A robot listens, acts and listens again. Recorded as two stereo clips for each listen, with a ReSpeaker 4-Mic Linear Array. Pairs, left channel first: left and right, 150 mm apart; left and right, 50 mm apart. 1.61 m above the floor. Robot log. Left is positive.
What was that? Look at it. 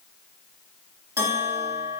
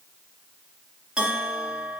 note: The bell: about 15° right or 165° right.
cmd yaw -15
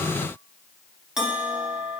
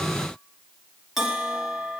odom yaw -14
end: Found it: a bell, straight ahead.